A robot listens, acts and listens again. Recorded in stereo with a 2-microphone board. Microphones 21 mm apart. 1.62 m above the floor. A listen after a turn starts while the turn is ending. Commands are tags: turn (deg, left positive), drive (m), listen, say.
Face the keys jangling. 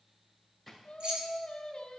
<turn deg="-65"/>
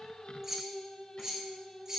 <turn deg="-35"/>
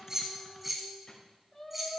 <turn deg="-10"/>
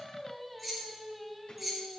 <say>Facing the keys jangling, 2 to 4 m away.</say>